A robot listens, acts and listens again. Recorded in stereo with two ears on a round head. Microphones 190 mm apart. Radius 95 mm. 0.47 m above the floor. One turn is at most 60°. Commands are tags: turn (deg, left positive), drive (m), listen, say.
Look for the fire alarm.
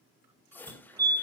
<turn deg="-20"/>
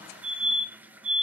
<turn deg="-60"/>
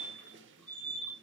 <turn deg="-60"/>
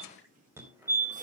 <turn deg="-15"/>
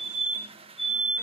<say>Found it: a fire alarm, straight ahead, 2 to 4 m away.</say>